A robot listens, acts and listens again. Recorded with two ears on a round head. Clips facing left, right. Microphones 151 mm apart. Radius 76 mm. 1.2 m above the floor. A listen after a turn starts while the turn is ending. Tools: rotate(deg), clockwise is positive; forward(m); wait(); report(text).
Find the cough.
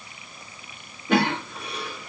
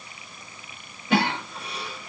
rotate(-45)
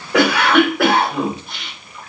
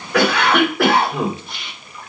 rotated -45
report("Facing the cough.")